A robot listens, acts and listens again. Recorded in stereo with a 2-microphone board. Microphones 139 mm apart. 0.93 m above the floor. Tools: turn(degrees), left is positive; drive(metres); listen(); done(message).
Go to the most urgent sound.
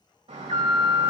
turn(degrees=-50)
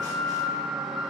drive(metres=1.0)
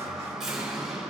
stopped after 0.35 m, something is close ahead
done("Something is in my way. I am facing the alarm but have not reached it.")